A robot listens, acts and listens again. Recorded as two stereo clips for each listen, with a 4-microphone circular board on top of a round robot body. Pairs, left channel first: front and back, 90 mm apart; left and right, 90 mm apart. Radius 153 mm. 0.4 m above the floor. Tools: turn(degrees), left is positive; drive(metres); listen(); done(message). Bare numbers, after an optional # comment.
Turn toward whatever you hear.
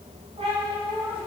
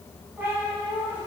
# The cat meowing: 165° right.
turn(-165)
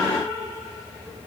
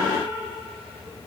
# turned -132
# The cat meowing is now 60° right.
turn(-60)
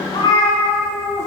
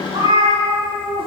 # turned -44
# The cat meowing is now 65° right.
turn(-65)
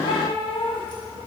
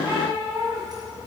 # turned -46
# The cat meowing is now 40° right.
turn(-40)
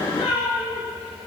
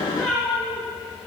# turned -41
done("Facing the cat meowing.")